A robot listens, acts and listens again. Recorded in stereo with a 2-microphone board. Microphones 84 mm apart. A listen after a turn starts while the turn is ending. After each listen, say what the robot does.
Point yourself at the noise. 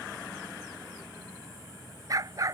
Turn 45° right.
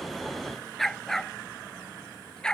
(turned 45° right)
Turn 10° left.
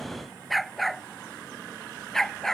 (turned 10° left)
Facing the dog barking.